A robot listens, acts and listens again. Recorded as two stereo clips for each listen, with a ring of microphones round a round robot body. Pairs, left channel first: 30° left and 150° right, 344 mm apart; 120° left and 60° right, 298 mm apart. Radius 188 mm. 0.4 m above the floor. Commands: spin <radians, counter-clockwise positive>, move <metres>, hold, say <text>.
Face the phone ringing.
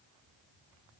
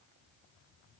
hold
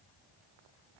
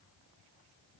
hold
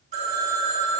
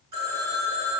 spin -1.40
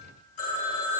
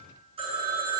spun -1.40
spin 0.17
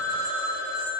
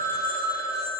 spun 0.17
say Facing the phone ringing.